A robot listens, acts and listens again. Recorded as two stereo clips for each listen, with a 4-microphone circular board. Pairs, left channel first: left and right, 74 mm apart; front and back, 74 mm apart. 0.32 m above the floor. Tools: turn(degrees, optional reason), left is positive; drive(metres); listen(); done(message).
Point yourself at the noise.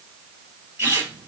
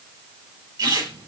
turn(degrees=-150, reason="The squeak: 150° right.")
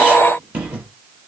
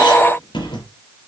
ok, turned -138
turn(degrees=-15, reason="The squeak is now 15° right.")
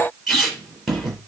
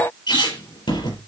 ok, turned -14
done("Found it: a squeak, straight ahead, 2 to 4 m away.")